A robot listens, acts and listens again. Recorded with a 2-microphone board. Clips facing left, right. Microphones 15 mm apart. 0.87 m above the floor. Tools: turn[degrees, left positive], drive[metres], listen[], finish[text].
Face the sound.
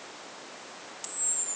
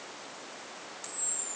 Thought: The camera shutter: about 20° left or 160° left.
Action: turn[20]
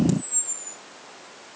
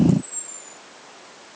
Thought: So it is at 140° left.
Action: turn[140]
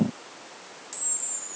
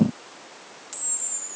Action: finish[Found it: a camera shutter, straight ahead.]